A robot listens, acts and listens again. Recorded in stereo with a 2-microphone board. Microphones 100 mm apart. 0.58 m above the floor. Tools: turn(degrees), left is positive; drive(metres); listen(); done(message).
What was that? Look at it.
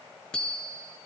turn(degrees=30)
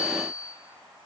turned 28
turn(degrees=145)
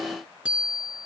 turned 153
turn(degrees=-10)
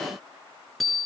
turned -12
done("Found it: a bicycle bell, straight ahead, over 4 m away.")